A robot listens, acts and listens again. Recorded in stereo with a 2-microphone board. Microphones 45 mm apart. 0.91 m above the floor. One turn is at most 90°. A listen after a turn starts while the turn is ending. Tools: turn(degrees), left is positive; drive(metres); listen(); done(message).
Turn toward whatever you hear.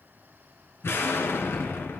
turn(degrees=65)
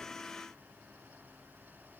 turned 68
listen()
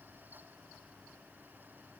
done("I heard an explosion, but can't make it out now. It was about 5° right or 50° left.")